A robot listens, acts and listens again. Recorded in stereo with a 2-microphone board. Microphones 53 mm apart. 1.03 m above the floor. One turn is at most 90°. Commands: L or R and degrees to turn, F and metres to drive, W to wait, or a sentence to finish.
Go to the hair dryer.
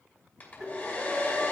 L35
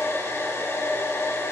L90
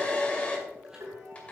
L25
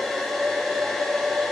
F1.0
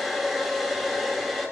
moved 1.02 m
F1.0
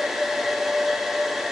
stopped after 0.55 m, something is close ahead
Arrived at the hair dryer, straight ahead.